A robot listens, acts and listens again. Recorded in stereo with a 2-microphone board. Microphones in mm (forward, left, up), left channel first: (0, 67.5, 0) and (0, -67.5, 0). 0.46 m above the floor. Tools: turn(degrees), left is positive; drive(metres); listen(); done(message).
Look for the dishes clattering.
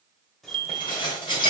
turn(degrees=35)
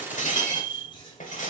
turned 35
turn(degrees=110)
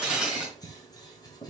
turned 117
done("Facing the dishes clattering, 1 to 2 m away.")